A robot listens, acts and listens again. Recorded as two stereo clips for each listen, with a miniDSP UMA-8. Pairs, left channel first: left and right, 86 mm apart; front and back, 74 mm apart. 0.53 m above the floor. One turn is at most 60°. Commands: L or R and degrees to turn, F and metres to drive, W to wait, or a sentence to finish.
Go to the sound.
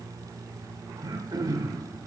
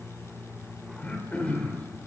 R60
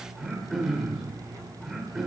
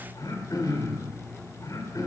F1.0
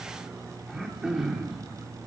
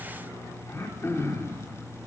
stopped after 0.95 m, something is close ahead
R10
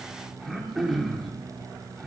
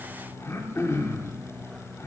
Arrived at the throat clearing, straight ahead.